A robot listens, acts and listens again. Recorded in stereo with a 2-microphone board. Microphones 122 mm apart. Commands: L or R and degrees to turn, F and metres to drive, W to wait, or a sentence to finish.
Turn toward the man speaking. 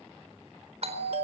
W
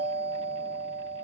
W
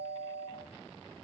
I can't make out a man speaking to turn to.